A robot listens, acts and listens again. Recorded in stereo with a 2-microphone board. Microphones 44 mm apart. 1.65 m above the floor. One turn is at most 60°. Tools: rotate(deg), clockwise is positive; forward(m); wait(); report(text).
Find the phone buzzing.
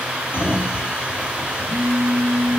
rotate(-45)
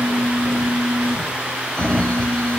rotate(-60)
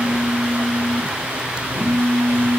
rotate(-30)
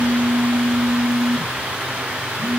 report("Found it: a phone buzzing, straight ahead, over 4 m away.")